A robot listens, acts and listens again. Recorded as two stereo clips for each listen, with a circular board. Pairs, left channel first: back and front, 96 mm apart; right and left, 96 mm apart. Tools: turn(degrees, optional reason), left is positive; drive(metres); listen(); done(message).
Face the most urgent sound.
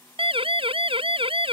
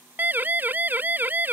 turn(degrees=20, reason="The siren: 20° left.")
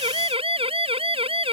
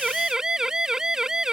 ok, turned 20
done("Found it: a siren, straight ahead.")